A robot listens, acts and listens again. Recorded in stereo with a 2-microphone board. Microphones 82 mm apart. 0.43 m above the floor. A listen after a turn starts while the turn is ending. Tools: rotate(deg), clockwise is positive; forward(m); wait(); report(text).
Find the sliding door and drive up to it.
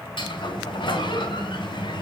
rotate(-70)
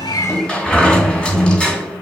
rotate(-10)
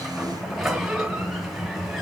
forward(1.0)
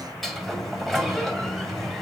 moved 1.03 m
forward(1.0)
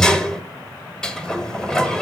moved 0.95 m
rotate(-10)
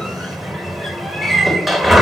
forward(1.0)
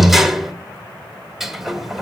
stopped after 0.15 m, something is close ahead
report("Arrived at the sliding door, straight ahead.")